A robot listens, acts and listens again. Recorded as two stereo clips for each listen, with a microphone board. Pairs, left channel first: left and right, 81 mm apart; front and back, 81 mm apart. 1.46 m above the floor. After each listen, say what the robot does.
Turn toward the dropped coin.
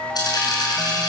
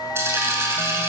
Turn 120° left.
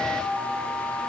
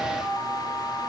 I heard a dropped coin from this way, but can't make it out now.